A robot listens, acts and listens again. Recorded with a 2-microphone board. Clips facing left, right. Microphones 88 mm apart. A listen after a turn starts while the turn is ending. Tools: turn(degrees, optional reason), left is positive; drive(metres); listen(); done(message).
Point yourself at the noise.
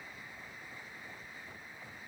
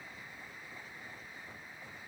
listen()
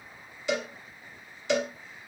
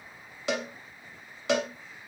turn(degrees=-90)
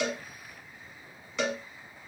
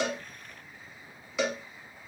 done("Facing the cowbell, under 1 m away.")